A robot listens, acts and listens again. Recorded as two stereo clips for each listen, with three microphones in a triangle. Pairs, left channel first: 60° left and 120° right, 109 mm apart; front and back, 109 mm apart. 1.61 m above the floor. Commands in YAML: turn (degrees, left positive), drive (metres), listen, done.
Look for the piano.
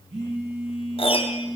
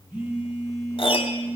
turn: 35
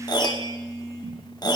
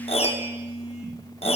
turn: 10
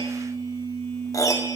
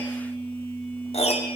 done: "Facing the piano, under 1 m away."